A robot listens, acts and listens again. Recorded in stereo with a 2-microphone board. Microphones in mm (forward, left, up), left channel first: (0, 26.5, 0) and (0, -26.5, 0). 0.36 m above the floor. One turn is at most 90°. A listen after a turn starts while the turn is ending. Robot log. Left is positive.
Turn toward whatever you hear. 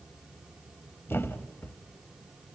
note: The thud: about 45° left or 135° left.
cmd yaw +45
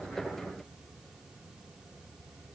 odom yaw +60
cmd idle
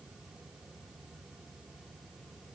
end: I heard a thud, but can't make it out now. It was about 15° right or 75° left.